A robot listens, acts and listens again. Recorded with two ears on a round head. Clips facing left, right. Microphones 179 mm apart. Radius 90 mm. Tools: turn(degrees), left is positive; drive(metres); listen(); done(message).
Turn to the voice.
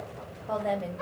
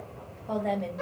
turn(degrees=30)
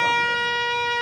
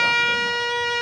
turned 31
listen()
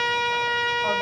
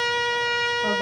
listen()
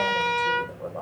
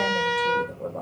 turn(degrees=-30)
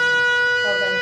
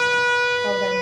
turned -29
listen()
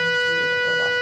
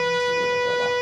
listen()
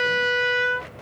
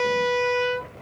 done("Facing where the woman speaking came from. I can't hear it now.")